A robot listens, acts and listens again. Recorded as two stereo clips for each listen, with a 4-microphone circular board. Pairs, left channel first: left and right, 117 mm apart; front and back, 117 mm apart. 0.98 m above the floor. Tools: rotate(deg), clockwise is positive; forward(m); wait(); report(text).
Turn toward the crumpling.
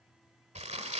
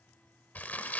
rotate(75)
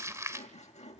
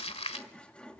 rotate(25)
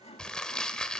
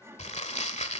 report("Found it: crumpling, straight ahead, 1 to 2 m away.")